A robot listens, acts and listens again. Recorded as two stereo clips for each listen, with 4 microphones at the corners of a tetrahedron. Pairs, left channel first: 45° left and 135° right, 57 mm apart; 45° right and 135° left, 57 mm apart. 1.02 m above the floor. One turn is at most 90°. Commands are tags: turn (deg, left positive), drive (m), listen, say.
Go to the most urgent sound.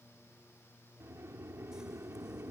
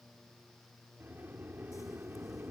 <listen/>
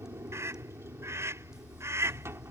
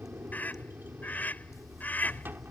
<turn deg="-90"/>
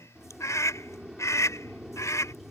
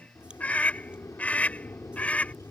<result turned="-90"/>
<turn deg="20"/>
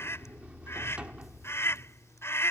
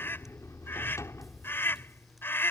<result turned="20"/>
<drive m="1.0"/>
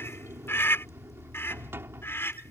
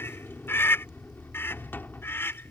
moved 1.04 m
<drive m="1.0"/>
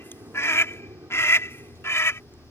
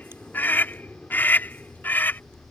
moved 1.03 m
<turn deg="10"/>
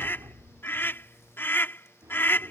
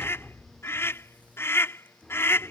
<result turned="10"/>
<drive m="1.0"/>
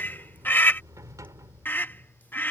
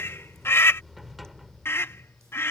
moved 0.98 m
<drive m="1.0"/>
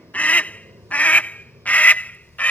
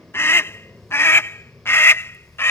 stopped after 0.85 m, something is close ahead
<turn deg="-15"/>
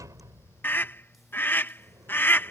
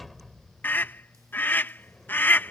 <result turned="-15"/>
<say>Arrived at the scream, straight ahead.</say>